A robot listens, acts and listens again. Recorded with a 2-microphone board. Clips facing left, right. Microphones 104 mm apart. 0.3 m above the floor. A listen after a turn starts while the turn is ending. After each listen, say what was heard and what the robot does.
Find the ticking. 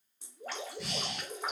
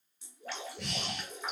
Keep listening.
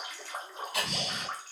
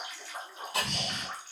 The ticking: about 30° right or 150° right. Turn 30° right.
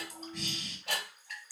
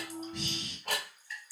So it is at 115° right. Turn 115° right.
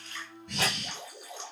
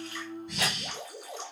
Keep listening.
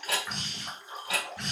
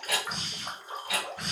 The ticking is now 35° left. Turn 35° left.
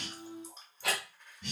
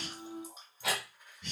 Found it: ticking, straight ahead.